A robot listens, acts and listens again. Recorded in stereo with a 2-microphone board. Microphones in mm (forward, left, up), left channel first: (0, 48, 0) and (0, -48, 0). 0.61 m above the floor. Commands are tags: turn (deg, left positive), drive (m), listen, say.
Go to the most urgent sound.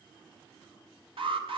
<turn deg="-70"/>
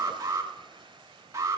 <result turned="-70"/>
<turn deg="-30"/>
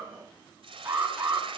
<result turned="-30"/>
<turn deg="-20"/>
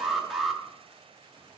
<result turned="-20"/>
<drive m="1.0"/>
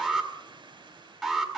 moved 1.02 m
<drive m="1.0"/>
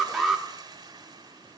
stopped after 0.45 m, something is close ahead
<say>Arrived at the alarm, straight ahead.</say>